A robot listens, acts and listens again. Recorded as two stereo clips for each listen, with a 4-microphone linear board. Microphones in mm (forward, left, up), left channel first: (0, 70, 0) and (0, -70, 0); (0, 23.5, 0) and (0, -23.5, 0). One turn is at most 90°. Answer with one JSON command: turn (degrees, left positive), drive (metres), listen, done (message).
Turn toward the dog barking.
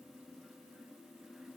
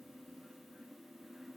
{"listen": true}
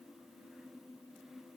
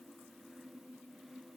{"listen": true}
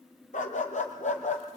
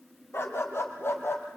{"turn": 55}
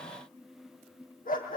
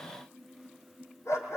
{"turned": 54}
{"turn": 80}
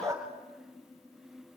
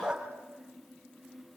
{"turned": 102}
{"turn": -20}
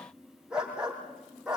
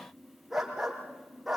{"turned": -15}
{"done": "Facing the dog barking."}